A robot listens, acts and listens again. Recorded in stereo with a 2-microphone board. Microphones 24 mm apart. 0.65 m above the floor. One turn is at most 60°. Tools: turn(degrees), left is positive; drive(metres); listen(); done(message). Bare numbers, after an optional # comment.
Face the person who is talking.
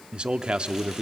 # The man speaking: about 45° right or 135° right.
turn(-45)
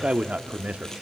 # So it is at 85° right.
turn(-60)
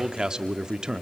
# The man speaking is now 40° right.
turn(-40)
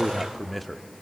done("Facing the man speaking, under 1 m away.")